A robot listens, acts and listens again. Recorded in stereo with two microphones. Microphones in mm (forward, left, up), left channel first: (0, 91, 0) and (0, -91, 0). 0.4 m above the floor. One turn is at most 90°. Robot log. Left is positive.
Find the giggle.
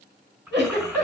note: The giggle: about 65° right or 115° right.
cmd yaw -65
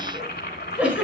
end: Found it: a giggle, straight ahead, over 4 m away.